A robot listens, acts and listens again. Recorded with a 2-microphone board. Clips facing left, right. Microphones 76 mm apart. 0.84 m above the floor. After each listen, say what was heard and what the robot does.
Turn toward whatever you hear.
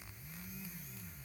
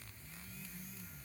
Keep listening.
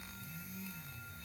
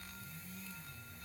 Keep listening.
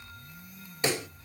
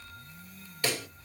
The pop: about 20° left or 160° left. Turn 20° left.
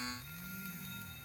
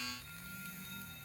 Keep listening.
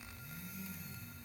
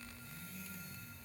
I heard a pop, but can't make it out now. It was about straight ahead or 140° left.